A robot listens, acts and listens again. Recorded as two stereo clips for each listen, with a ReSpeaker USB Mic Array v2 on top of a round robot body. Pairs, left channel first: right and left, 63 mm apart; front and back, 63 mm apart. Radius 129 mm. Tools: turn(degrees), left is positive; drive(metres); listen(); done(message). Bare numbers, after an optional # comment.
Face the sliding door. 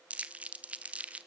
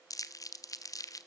listen()
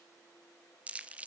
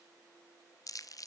listen()
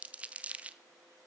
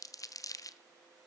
done("I can't make out a sliding door, only crumpling.")